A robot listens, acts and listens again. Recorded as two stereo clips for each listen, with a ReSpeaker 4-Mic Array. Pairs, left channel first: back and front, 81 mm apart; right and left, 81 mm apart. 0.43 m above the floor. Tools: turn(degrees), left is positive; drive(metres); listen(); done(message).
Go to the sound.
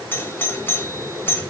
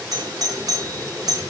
turn(degrees=120)
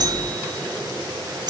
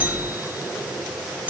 turn(degrees=20)
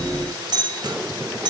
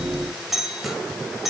drive(metres=1.0)
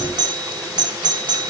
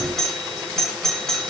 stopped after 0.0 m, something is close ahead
done("Something is in my way. I am facing the doorbell but have not reached it.")